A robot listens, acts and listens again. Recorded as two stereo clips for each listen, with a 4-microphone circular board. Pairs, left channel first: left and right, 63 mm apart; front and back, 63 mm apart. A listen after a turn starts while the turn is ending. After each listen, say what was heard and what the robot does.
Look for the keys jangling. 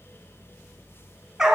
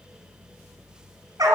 Keep listening.
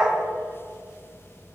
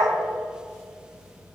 Keep listening.
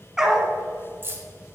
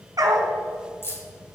The keys jangling: 40° right. Turn 40° right.
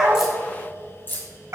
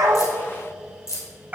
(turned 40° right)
The keys jangling is now 35° left. Turn 35° left.
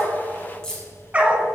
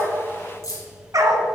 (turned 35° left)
The keys jangling is now 10° left. Turn 10° left.
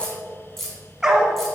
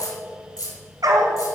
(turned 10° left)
Found it: keys jangling, straight ahead, 2 to 4 m away.